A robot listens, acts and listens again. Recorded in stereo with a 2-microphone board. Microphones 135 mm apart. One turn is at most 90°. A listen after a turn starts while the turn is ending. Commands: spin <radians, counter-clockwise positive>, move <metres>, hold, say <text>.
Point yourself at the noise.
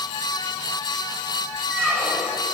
spin 0.52
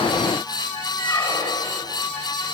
spin 1.57
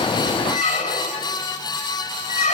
spin 1.05
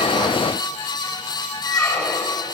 say Facing the squeak.